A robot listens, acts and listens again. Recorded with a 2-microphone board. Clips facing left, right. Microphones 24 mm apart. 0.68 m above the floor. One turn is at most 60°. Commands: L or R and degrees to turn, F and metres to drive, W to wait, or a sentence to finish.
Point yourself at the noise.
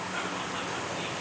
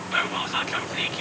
R60
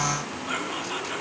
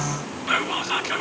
R45
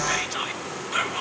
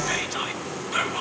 Found it: whispering, straight ahead, 1 to 2 m away.